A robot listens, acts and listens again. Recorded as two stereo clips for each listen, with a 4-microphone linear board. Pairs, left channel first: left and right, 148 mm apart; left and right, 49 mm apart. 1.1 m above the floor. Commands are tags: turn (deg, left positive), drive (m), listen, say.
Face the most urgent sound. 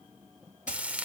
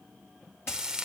<listen/>
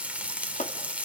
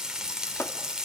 <listen/>
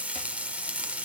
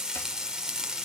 <say>I can't make out anything urgent, only frying.</say>